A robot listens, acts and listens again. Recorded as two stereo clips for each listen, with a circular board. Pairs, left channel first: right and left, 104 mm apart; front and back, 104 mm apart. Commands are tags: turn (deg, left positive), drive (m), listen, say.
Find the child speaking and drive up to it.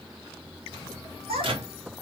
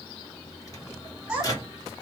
<turn deg="100"/>
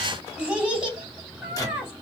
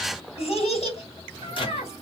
<turn deg="10"/>
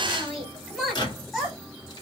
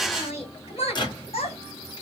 <drive m="1.0"/>
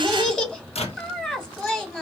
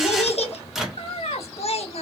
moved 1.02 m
<drive m="1.0"/>
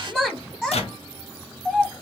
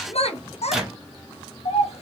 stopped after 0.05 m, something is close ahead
<say>Arrived at the child speaking, straight ahead.</say>